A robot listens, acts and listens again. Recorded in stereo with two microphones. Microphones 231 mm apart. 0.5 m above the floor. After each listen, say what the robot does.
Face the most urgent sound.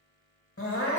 Turn 90° left.
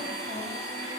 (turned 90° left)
Keep listening.
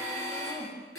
Turn 15° left.
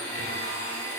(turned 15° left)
Keep listening.
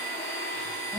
Keep listening.
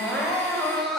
Found it: crying, straight ahead, 1 to 2 m away.